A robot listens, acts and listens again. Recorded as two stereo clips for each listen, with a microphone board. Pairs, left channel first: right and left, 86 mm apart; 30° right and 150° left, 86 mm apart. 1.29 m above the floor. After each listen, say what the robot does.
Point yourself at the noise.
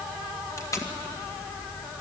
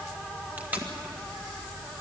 Turn 140° right.
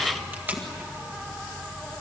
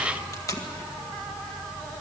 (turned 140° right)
Turn 20° left.
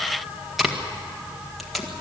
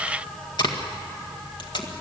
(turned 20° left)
Found it: tape being pulled, straight ahead, 1 to 2 m away.